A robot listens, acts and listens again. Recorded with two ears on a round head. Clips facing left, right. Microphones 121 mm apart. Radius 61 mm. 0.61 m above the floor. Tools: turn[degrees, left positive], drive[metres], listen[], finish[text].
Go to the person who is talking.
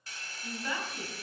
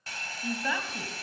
Thought: The woman speaking: about 60° right or 120° right.
Action: turn[-60]
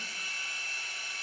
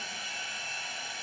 Action: listen[]
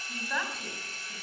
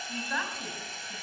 Action: drive[1.0]
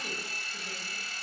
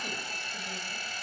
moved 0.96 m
Action: listen[]
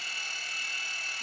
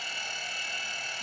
Action: listen[]
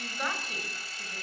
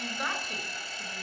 Action: drive[1.0]
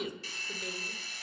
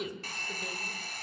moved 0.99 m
Action: drive[1.0]
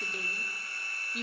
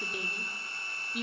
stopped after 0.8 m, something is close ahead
Action: finish[Arrived at the woman speaking, straight ahead.]